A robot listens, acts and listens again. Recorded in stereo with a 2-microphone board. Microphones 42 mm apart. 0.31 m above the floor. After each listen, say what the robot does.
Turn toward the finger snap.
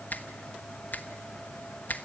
Turn 50° left.
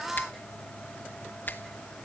Turn 70° left.
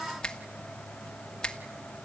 Turn 25° left.
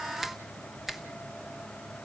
Facing the finger snap.